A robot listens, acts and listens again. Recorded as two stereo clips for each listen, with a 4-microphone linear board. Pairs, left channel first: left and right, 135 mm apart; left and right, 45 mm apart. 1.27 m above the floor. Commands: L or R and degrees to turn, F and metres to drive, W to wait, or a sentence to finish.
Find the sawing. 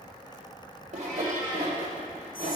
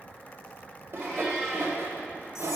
R50
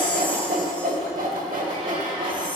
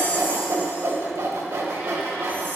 R75
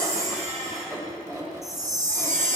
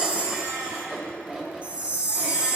R20
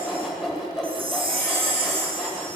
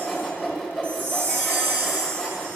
Facing the sawing, 1 to 2 m away.